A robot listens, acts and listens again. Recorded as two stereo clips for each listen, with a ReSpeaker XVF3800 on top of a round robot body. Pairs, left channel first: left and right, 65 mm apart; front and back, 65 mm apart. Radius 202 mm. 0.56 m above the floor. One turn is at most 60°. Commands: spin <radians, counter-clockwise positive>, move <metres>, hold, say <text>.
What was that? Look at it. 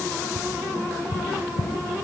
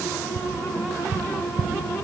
spin 1.05
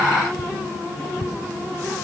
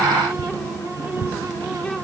spin 1.05
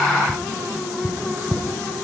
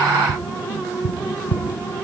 spin -0.17
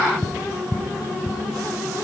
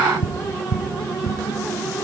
say Facing the tapping.